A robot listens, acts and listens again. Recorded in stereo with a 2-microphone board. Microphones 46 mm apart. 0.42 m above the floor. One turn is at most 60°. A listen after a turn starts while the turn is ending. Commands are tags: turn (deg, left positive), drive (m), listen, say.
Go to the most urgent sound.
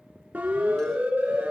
<turn deg="-40"/>
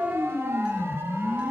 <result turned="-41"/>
<turn deg="-60"/>
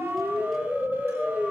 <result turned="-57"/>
<turn deg="-45"/>
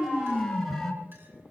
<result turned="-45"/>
<drive m="1.0"/>
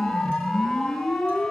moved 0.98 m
<drive m="1.0"/>
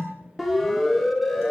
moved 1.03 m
<drive m="1.0"/>
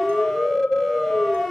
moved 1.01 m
<drive m="1.0"/>
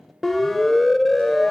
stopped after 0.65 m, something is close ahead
<say>Arrived at the siren, straight ahead.</say>